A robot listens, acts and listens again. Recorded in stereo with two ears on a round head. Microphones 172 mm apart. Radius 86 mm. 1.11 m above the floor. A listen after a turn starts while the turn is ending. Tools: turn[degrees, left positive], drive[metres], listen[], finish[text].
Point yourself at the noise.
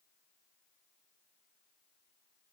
Action: listen[]
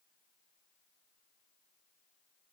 Action: listen[]
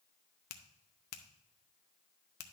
Thought: The finger snap: about 55° left or 125° left.
Action: turn[55]
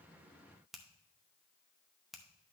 Action: finish[Found it: a finger snap, straight ahead, under 1 m away.]